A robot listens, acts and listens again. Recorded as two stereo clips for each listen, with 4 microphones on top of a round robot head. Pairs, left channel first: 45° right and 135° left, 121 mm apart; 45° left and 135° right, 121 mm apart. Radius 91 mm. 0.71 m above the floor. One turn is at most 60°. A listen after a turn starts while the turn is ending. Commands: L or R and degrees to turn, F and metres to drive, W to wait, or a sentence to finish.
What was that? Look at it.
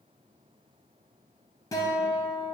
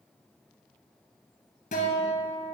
L20
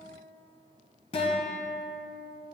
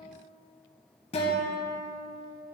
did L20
Found it: a guitar, straight ahead.